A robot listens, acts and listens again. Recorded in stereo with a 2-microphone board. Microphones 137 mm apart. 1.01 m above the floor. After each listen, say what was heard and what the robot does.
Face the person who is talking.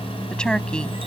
Turn 30° left.
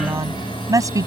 So it is at 25° right. Turn 25° right.
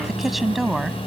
Facing the woman speaking.